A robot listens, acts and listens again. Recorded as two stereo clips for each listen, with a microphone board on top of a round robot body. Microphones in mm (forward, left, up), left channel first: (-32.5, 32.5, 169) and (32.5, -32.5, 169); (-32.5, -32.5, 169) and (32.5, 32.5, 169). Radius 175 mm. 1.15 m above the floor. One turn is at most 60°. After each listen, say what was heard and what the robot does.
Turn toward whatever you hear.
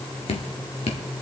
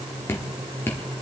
The dripping: 155° left. Turn 60° left.
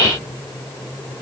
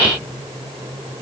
Nothing new. It was at 95° left. Turn 60° left.
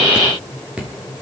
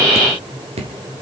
The dripping is now 35° left. Turn 35° left.
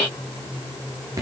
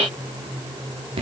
The dripping is now 15° left. Turn 15° left.
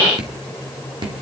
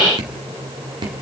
Facing the dripping.